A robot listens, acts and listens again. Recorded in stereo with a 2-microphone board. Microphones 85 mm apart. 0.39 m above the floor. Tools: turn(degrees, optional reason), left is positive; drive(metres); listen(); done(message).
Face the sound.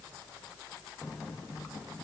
listen()
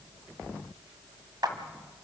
turn(degrees=-50, reason="The clap: about 50° right or 130° right.")
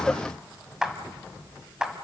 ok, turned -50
turn(degrees=-10, reason="So it is at 10° right.")
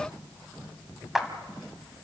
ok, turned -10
done("Found it: a clap, straight ahead, 1 to 2 m away.")